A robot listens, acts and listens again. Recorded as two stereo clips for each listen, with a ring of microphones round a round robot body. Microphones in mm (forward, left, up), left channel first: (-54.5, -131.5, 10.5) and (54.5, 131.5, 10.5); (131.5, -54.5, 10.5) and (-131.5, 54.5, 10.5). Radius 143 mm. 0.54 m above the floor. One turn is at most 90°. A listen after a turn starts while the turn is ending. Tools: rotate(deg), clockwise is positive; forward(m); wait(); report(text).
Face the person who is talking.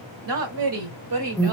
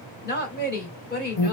rotate(-35)
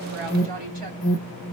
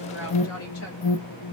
wait()
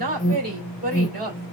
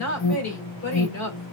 rotate(-10)
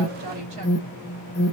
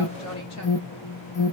wait()
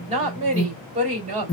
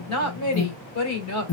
report("Found it: a woman speaking, straight ahead.")